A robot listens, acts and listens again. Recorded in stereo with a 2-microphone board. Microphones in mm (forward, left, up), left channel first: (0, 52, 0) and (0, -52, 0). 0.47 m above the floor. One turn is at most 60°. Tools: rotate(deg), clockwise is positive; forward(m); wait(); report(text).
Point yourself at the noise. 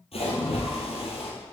rotate(-60)
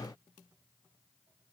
wait()
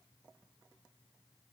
report("I heard a splash, but can't make it out now. It was about 15° left or 45° left.")